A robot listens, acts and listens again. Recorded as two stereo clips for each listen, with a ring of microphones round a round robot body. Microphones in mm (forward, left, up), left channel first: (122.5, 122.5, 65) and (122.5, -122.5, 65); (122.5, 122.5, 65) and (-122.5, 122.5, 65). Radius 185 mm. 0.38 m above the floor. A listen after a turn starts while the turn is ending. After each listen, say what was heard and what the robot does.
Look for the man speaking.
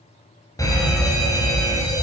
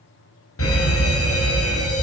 Keep listening.
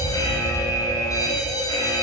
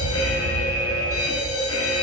Keep listening.
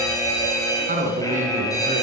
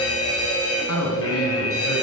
The man speaking: 35° right. Turn 35° right.
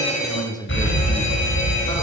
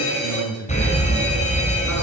The man speaking is now 15° left. Turn 15° left.
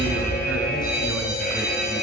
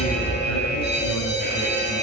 Keep listening.
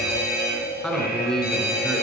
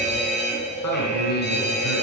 Found it: a man speaking, straight ahead, over 4 m away.